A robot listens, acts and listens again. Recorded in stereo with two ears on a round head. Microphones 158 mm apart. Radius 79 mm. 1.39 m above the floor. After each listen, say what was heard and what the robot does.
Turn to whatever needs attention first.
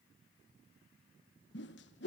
Keep listening.
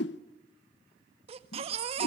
The baby crying: about 35° right or 145° right. Turn 35° right.
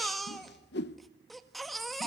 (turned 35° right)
Facing the baby crying, 1 to 2 m away.